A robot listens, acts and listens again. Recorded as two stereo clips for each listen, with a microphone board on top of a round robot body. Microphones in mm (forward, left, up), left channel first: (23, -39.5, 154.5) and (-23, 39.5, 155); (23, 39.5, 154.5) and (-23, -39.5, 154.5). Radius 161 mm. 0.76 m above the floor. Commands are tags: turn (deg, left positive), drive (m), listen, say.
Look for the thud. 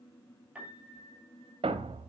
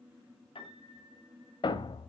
<turn deg="100"/>
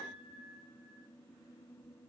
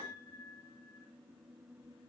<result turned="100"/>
<say>Facing where the thud came from. I can't hear it now.</say>